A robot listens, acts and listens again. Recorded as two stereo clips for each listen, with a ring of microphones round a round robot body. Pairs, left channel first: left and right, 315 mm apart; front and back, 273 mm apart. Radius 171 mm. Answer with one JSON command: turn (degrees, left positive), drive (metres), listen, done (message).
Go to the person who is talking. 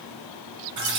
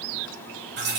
{"listen": true}
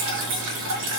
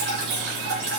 {"listen": true}
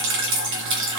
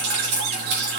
{"done": "I can't make out anyone speaking, only dripping."}